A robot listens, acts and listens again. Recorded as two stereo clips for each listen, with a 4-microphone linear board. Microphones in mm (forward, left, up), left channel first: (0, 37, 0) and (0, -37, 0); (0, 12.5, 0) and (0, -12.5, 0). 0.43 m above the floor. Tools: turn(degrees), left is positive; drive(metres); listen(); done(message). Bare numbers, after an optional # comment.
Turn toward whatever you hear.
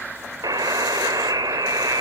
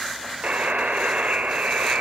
# The buzzer: about 55° right or 125° right.
turn(-55)
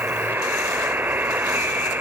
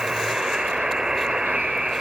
# So it is at 30° right.
turn(-30)
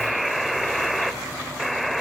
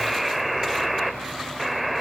done("Found it: a buzzer, straight ahead, 1 to 2 m away.")